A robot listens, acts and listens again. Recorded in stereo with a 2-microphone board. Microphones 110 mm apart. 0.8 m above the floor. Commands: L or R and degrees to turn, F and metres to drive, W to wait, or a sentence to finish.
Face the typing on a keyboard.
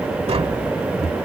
W
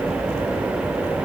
W
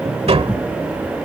I can't make out typing on a keyboard, only tapping.